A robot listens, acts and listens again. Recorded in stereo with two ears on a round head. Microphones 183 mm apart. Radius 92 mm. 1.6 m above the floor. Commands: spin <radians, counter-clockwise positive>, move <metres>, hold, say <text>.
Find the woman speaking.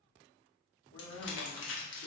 spin 1.57
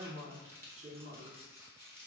spin -0.79
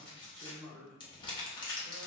spin -0.61
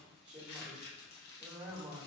spin -0.17
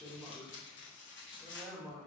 say Facing the woman speaking.